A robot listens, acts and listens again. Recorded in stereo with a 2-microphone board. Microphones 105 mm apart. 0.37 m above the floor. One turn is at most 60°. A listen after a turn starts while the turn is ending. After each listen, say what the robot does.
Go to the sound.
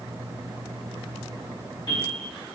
Turn 55° left.
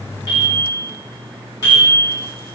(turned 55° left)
Turn 50° left.
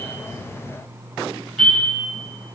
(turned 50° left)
Drive 1.0 m forward.
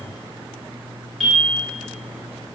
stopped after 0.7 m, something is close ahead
I am next to the bell.